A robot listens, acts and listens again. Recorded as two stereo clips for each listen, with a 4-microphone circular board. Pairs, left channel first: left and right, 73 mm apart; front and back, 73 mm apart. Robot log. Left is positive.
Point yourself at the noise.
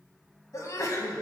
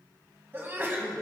note: The sneeze: 125° left.
cmd yaw +125
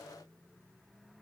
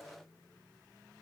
end: Facing where the sneeze came from. I can't hear it now.